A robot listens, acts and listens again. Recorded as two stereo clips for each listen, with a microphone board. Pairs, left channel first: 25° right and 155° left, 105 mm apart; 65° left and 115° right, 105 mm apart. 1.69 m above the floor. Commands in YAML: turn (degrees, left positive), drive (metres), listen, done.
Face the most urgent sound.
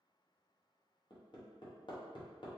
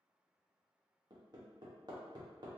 listen: true
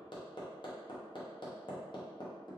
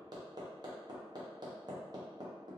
listen: true
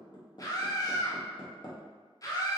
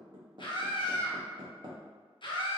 turn: 30
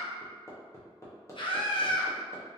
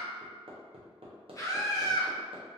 turn: 10
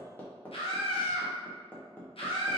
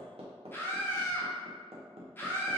done: "Found it: a scream, straight ahead."